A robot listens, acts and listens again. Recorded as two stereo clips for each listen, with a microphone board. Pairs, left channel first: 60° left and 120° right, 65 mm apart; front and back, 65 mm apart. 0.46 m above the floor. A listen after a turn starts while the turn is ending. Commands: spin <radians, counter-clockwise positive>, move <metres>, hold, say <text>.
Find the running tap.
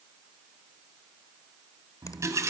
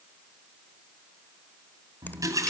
spin -2.71
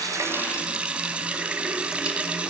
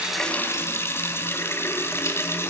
spin -0.87
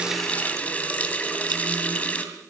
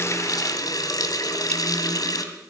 say Found it: a running tap, straight ahead, 2 to 4 m away.